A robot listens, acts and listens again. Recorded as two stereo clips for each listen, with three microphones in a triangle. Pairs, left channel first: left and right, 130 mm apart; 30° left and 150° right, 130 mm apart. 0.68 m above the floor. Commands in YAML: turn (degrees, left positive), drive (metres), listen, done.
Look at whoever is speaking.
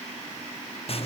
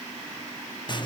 listen: true
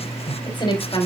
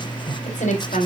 turn: 40
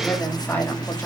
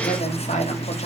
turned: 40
listen: true
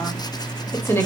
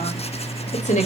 turn: 20
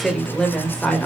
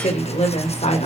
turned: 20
turn: 10
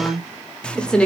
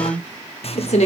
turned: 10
turn: 10
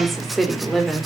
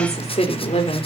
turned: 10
done: "Found it: a woman speaking, straight ahead, 2 to 4 m away."